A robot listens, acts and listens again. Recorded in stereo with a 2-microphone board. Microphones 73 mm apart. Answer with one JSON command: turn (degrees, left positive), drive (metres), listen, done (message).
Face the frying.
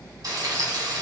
{"turn": -55}
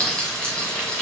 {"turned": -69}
{"turn": 10}
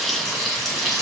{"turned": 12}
{"done": "Facing the frying."}